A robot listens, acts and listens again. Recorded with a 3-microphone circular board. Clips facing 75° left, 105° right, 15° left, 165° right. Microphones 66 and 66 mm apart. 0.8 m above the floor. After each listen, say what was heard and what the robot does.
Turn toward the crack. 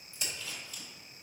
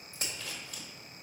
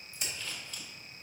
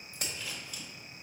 The crack: 145° right. Turn 145° right.
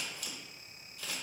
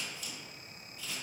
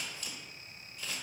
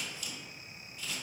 Facing where the crack came from. I can't hear it now.